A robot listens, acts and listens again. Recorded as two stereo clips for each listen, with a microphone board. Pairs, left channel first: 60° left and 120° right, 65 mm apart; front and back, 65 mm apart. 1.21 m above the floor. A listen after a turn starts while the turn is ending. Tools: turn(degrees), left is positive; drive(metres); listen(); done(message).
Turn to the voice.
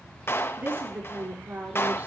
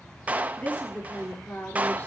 turn(degrees=-60)
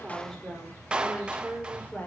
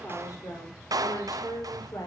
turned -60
done("Facing the woman speaking, over 4 m away.")